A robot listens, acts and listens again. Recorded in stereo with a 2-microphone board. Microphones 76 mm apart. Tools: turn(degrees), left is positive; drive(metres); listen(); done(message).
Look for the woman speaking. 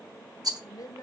turn(degrees=55)
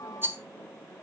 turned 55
listen()
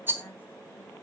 listen()
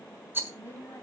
turn(degrees=35)
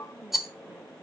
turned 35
listen()
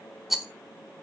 listen()
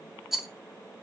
done("I heard a woman speaking from this way, but can't make it out now.")